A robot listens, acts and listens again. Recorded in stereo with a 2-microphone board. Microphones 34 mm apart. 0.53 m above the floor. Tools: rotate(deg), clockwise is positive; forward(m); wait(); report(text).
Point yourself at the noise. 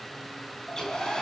rotate(-20)
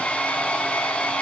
rotate(-140)
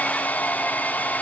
rotate(-50)
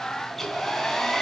report("Found it: a hair dryer, straight ahead.")